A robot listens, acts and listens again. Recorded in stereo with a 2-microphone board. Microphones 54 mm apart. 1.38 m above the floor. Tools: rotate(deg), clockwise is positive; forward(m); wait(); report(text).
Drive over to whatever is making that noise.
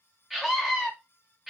rotate(30)
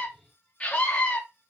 rotate(-25)
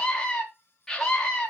rotate(-10)
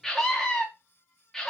forward(1.0)
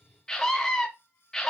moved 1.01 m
rotate(-10)
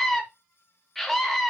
forward(1.0)
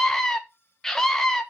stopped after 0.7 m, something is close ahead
rotate(-10)
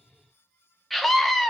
report("Arrived at the scream, straight ahead.")